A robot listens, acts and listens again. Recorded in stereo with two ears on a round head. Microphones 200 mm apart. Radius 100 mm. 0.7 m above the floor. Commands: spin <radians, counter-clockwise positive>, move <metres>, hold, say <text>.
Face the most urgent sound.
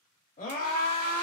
spin 0.70
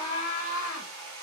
spin 1.57
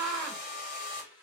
say Found it: a scream, straight ahead.